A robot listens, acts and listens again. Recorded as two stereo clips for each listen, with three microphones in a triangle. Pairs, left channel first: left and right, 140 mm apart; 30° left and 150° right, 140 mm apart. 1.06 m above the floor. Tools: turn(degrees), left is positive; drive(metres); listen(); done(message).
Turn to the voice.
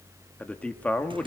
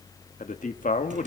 turn(degrees=10)
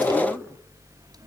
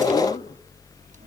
listen()
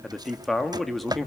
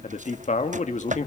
done("Facing the man speaking.")